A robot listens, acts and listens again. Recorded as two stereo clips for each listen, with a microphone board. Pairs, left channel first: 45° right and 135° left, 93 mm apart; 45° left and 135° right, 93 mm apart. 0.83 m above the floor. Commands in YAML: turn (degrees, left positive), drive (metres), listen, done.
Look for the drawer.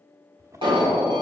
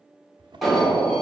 turn: -170
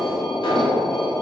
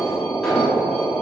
listen: true
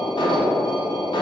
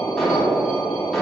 listen: true
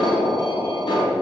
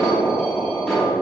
done: "Facing where the drawer came from. I can't hear it now."